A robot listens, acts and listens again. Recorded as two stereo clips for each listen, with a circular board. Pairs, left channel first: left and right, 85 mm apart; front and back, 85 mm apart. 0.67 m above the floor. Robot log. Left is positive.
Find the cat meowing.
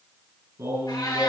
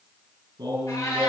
note: The cat meowing: 50° left.
cmd yaw +50
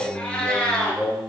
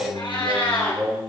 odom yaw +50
note: The cat meowing is now 10° left.
cmd yaw +10
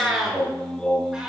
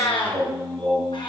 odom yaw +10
end: Facing the cat meowing, 2 to 4 m away.